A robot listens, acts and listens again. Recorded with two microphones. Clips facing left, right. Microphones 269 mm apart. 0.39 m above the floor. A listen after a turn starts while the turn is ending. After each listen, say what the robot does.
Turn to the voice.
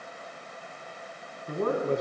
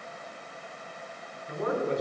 Turn 55° left.
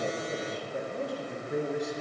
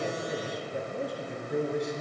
Facing the man speaking.